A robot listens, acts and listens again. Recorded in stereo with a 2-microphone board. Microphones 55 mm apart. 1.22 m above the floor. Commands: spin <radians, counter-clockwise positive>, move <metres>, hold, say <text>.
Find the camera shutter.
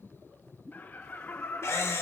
spin 0.96
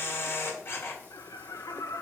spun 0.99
spin 0.96
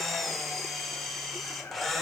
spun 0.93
say Facing the camera shutter, 1 to 2 m away.